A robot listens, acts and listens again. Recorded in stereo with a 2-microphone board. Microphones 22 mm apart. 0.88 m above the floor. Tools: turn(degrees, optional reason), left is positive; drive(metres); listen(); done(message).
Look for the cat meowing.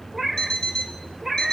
turn(degrees=-30)
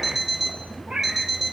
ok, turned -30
turn(degrees=-130, reason="So it is at 130° right.")
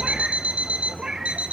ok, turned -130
listen()
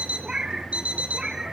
turn(degrees=-45, reason="The cat meowing is now 45° right.")
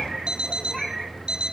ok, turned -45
listen()
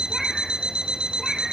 listen()
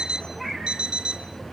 done("Facing where the cat meowing came from. I can't hear it now.")